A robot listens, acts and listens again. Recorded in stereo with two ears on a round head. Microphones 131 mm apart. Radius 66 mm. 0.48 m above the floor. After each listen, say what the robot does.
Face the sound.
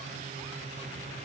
Keep listening.
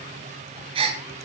Turn 35° right.
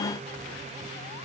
Keep listening.
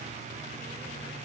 I heard a gasp, but can't make it out now. It was about straight ahead or 110° right.